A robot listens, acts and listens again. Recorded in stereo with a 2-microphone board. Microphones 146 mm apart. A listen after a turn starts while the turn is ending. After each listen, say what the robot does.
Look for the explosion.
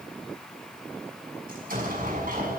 Turn 90° right.
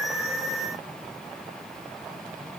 I heard an explosion from this way, but can't make it out now.